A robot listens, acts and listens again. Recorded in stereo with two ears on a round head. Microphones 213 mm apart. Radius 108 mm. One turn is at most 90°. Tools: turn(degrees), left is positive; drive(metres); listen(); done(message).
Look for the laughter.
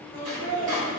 turn(degrees=15)
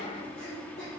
listen()
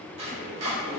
listen()
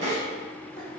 done("I heard laughter, but can't make it out now. It was about straight ahead or 150° left.")